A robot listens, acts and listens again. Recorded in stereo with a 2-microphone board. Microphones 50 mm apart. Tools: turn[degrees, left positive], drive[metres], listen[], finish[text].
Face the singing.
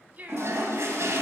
Thought: The singing: about 35° right or 145° right.
Action: turn[-35]
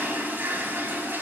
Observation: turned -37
Action: listen[]
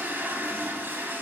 Action: listen[]
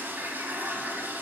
Action: finish[I heard singing, but can't make it out now. It was about straight ahead or 105° right.]